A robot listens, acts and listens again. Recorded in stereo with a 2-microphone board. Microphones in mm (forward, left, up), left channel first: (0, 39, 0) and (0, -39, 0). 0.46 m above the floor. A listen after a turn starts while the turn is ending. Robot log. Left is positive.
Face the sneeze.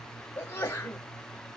note: The sneeze: about 30° left or 150° left.
cmd yaw +30
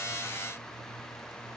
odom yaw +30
cmd idle
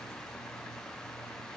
end: I heard a sneeze, but can't make it out now. It was about straight ahead or 120° left.